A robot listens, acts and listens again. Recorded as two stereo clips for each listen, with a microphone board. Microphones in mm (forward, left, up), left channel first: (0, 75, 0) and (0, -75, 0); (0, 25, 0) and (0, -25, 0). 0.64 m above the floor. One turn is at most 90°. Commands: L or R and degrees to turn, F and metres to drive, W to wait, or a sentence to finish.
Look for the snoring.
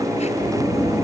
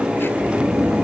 R30
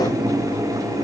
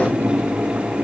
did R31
W
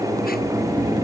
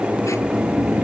R90
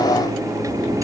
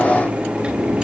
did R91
R50
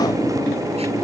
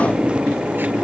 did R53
W
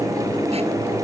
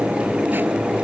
I heard snoring from this way, but can't make it out now.